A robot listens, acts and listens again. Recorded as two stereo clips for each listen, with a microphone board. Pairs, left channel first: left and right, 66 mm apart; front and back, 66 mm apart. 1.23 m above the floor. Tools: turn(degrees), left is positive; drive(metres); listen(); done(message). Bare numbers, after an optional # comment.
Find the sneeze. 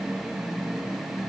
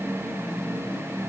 listen()
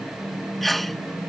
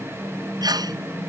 # The sneeze: straight behind.
turn(180)
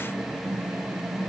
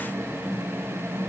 done("Facing where the sneeze came from. I can't hear it now.")